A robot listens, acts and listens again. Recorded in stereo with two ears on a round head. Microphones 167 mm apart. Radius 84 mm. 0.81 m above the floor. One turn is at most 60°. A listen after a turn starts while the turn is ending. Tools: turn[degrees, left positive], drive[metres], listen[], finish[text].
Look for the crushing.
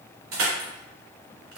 Action: turn[-60]
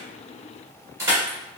Thought: So it is at 15° right.
Action: turn[-15]
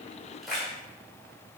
Action: finish[Facing the crushing.]